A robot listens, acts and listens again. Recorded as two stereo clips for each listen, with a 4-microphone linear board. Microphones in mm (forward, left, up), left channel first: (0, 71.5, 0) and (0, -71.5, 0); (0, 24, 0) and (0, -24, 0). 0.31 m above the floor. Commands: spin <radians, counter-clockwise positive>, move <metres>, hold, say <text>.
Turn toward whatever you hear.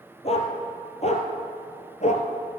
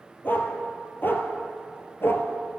spin 0.96
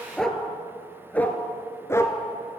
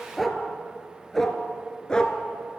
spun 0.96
spin 0.35
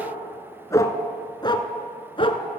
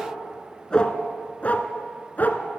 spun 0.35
spin 0.70
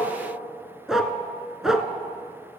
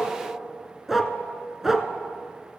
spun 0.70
say Facing the dog barking.